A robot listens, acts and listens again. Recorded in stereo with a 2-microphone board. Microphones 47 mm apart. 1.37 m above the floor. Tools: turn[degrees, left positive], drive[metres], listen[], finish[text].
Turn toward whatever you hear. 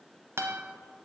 Thought: The guitar: about 70° right or 110° right.
Action: turn[-70]
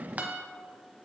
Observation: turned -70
Thought: So it is at 40° right.
Action: turn[-40]
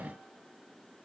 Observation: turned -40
Action: listen[]
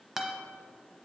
Thought: The guitar is now 10° right.
Action: turn[-10]
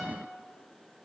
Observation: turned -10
Action: listen[]
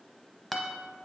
Action: finish[Facing the guitar.]